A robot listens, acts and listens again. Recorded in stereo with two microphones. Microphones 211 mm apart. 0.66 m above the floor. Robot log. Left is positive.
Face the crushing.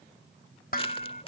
note: The crushing: about 25° left or 155° left.
cmd yaw +25
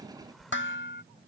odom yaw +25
end: Found it: crushing, straight ahead.